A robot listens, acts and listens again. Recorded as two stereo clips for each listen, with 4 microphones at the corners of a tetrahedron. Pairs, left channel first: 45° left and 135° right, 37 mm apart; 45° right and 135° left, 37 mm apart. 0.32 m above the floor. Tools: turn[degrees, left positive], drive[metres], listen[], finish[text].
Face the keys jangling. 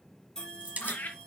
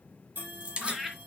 Thought: The keys jangling: 175° right.
Action: turn[-175]
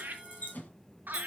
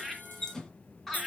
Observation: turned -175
Thought: The keys jangling is now 25° left.
Action: turn[25]
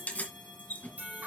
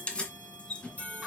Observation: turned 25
Thought: The keys jangling is now 15° left.
Action: turn[15]
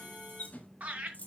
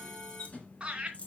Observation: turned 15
Action: finish[Found it: keys jangling, straight ahead.]